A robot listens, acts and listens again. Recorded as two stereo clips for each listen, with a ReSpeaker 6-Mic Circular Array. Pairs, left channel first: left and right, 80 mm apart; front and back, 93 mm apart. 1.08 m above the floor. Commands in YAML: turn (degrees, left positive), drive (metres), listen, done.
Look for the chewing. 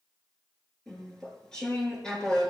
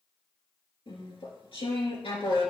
turn: 10
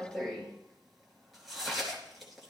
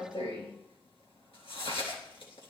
done: "Found it: chewing, straight ahead."